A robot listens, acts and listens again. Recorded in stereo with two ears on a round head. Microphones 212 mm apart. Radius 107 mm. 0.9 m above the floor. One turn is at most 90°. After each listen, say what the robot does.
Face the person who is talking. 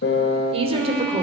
Turn 25° right.
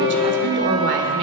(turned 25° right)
Turn 90° right.
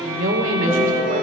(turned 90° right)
Turn 35° right.
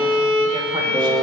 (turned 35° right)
Keep listening.
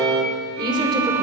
Turn 20° right.
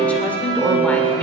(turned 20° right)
Facing the woman speaking, 2 to 4 m away.